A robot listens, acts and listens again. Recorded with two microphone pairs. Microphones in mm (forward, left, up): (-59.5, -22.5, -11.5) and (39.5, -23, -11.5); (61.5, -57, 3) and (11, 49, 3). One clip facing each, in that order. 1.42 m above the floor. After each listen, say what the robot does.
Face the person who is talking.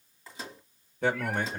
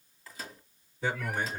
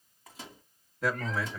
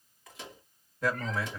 Turn 150° right.
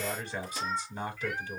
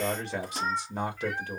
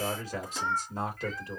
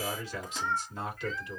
Turn 15° right.
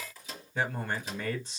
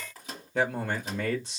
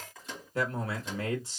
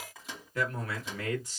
Facing the man speaking, 1 to 2 m away.